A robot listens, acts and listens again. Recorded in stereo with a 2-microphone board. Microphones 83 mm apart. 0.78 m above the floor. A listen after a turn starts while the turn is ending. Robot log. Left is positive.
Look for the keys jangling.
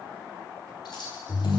note: The keys jangling: about 65° left or 115° left.
cmd yaw +65
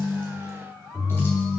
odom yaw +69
cmd idle
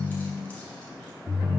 cmd idle
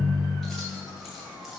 end: Found it: keys jangling, straight ahead, 2 to 4 m away.